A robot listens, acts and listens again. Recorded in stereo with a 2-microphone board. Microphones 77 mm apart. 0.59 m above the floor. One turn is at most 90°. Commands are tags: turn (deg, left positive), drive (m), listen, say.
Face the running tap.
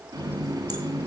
<turn deg="-50"/>
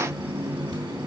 <turn deg="-80"/>
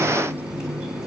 <turn deg="-10"/>
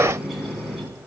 <say>Found it: a running tap, straight ahead.</say>